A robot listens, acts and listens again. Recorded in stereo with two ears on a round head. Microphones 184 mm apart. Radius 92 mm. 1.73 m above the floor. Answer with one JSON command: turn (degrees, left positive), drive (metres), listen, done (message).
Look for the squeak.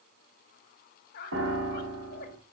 {"turn": 50}
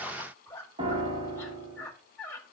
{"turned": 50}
{"turn": 15}
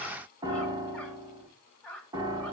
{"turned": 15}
{"turn": 10}
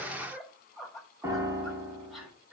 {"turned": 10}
{"done": "Found it: a squeak, straight ahead."}